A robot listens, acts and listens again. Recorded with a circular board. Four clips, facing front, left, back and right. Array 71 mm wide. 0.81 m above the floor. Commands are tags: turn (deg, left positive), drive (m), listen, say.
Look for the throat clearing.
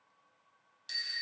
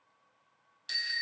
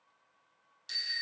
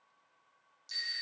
<listen/>
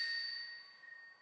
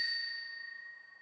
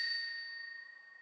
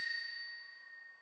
<listen/>
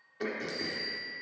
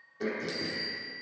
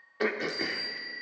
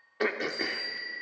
<turn deg="-125"/>
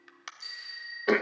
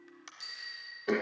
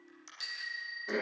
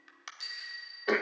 <turn deg="-20"/>
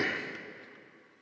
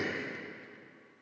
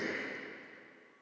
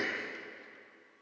<say>Facing the throat clearing.</say>